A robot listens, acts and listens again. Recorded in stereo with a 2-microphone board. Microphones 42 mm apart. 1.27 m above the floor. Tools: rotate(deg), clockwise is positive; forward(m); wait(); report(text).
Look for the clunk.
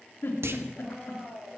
rotate(90)
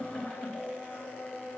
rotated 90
report("Facing where the clunk came from. I can't hear it now.")